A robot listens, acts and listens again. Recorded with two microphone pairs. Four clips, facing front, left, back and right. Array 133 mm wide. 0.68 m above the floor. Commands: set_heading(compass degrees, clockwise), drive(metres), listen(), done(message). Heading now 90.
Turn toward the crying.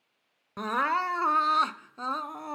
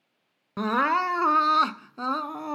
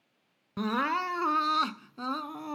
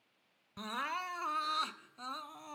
set_heading(20)
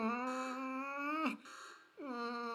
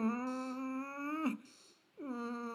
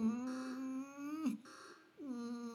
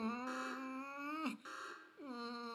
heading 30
done("Found it: crying, straight ahead.")